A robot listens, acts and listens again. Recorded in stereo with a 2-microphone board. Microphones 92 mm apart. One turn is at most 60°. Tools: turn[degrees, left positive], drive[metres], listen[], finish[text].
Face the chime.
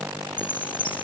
Thought: The chime: about 75° left or 105° left.
Action: turn[60]
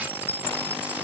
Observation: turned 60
Thought: So it is at 20° left.
Action: turn[20]
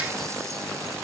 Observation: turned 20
Action: listen[]
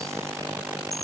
Action: finish[Found it: a chime, straight ahead.]